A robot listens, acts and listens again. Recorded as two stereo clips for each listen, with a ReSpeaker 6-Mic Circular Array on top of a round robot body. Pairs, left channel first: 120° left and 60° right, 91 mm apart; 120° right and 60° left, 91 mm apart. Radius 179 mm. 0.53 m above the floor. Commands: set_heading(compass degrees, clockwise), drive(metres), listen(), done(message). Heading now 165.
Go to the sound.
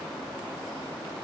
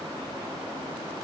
listen()
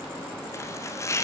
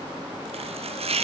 set_heading(105)
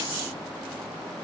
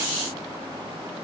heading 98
set_heading(108)
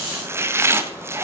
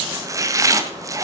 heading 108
drive(1.0)
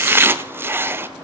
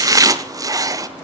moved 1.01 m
drive(1.0)
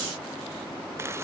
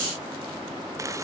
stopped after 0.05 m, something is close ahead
listen()
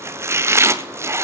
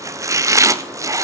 done("I am next to the chopping.")